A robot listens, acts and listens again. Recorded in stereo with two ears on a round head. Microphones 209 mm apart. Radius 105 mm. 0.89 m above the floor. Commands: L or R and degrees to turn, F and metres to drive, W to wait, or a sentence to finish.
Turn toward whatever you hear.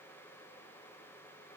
W
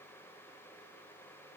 W
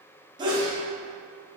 R20
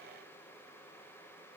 W
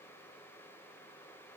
I heard a sneeze, but can't make it out now. It was about straight ahead or 140° right.